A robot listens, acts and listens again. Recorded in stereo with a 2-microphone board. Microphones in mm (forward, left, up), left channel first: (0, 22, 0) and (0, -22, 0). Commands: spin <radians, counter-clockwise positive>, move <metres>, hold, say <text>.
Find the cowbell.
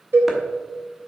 spin -1.57
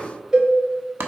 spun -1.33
spin -0.35
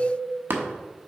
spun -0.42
hold
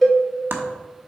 say Facing the cowbell.